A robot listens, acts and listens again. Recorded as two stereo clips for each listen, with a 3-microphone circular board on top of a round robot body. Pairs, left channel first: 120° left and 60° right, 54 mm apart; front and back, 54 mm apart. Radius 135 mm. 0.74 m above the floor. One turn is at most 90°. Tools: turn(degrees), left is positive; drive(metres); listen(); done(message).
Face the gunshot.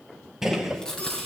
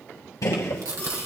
turn(degrees=20)
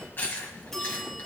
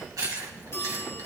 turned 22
done("I heard a gunshot from this way, but can't make it out now.")